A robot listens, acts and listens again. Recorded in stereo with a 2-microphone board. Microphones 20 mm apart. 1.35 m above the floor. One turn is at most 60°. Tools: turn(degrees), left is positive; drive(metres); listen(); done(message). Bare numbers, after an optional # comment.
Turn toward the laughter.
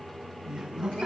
# The laughter: about 50° right or 130° right.
turn(-50)
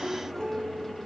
done("Facing the laughter.")